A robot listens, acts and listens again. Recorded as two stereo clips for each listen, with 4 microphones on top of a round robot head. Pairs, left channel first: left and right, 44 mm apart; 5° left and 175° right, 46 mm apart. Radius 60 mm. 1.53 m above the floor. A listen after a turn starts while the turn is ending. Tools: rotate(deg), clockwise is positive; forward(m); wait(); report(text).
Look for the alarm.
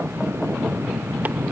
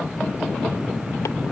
wait()
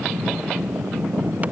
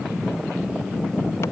wait()
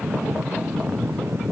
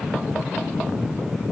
report("I can't make out an alarm to turn to.")